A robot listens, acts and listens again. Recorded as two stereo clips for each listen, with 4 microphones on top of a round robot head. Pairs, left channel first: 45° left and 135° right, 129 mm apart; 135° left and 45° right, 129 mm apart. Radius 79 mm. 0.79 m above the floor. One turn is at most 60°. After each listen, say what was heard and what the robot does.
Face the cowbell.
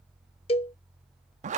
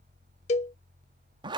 The cowbell: 95° left. Turn 60° left.
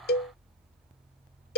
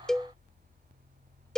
The cowbell is now 45° left. Turn 45° left.
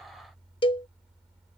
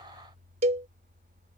Found it: a cowbell, straight ahead.